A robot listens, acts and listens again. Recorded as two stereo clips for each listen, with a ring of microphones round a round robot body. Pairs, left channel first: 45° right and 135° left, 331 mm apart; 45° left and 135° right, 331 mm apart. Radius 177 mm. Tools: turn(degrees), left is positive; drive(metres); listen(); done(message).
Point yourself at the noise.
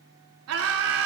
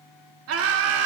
turn(degrees=180)
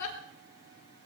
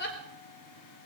turn(degrees=-10)
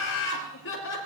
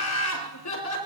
turn(degrees=10)
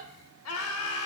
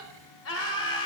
done("Found it: laughter, straight ahead, over 4 m away.")